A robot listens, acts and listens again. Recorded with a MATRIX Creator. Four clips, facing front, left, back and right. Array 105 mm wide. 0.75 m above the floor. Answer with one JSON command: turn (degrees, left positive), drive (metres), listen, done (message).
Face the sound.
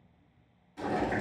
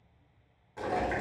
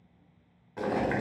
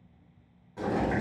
{"turn": 175}
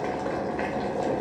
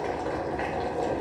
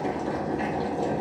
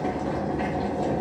{"turn": 25}
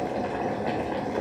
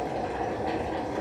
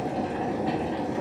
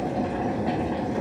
{"done": "Facing the boiling, 1 to 2 m away."}